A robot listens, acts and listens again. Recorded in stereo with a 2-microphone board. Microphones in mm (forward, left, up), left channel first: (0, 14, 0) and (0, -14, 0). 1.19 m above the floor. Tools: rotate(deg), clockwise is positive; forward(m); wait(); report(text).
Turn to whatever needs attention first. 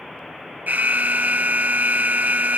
rotate(90)
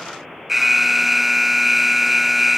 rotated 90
report("Facing the alarm.")